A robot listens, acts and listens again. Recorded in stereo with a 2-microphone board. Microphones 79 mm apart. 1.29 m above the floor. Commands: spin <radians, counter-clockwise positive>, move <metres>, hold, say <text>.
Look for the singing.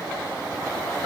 hold
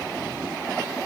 hold
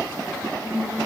spin -0.61
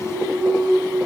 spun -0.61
spin -0.17
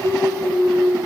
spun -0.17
say Facing the singing.